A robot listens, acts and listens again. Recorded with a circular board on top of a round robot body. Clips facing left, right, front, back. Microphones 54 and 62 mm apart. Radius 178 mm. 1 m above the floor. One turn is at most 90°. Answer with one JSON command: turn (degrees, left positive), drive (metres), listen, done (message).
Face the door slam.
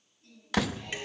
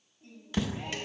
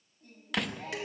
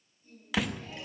{"turn": 90}
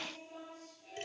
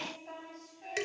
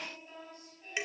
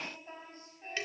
{"done": "Facing where the door slam came from. I can't hear it now."}